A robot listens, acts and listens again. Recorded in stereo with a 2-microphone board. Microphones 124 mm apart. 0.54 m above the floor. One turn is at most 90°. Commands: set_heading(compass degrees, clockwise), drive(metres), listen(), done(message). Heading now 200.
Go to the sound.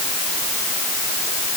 listen()
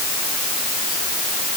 listen()
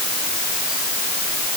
done("I can't make out anything.")